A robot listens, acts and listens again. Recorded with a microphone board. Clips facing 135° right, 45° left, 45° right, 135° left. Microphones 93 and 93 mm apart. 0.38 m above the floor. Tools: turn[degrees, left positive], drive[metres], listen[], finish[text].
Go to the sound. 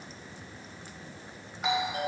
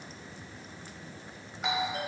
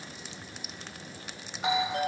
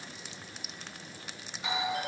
Thought: The doorbell: 45° right.
Action: turn[-45]
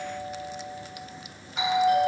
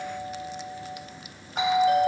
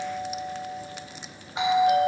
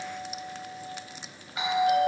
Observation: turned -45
Thought: The doorbell is now 15° left.
Action: turn[15]
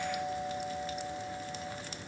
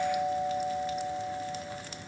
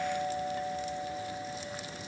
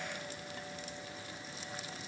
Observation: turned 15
Action: drive[1.0]
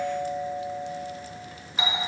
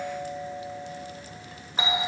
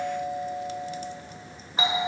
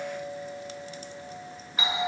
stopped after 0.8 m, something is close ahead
Action: finish[Arrived at the doorbell, straight ahead.]